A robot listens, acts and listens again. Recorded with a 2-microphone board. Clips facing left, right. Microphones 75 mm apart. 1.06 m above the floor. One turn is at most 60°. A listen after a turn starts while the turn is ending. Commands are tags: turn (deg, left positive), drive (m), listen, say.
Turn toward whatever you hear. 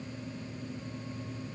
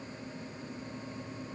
<listen/>
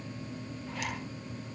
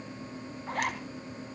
<turn deg="-55"/>
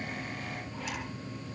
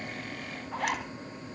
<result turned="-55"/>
<turn deg="-60"/>
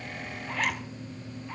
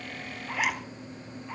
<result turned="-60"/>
<turn deg="-10"/>
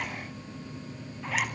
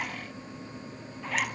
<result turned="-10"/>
<say>Facing the zipper, 2 to 4 m away.</say>